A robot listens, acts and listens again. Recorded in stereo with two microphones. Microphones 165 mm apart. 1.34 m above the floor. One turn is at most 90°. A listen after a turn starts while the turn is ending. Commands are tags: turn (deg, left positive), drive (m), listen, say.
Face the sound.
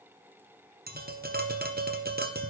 <turn deg="-65"/>
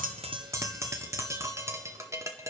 <turn deg="-20"/>
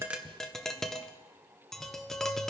<say>Found it: tapping, straight ahead, under 1 m away.</say>